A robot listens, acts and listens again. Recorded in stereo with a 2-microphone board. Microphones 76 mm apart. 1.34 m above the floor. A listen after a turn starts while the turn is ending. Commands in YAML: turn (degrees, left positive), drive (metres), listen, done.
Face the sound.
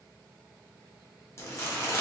turn: 40
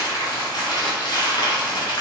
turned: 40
turn: 95
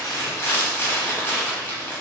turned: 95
turn: 30
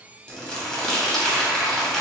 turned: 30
done: "Found it: crumpling, straight ahead, 1 to 2 m away."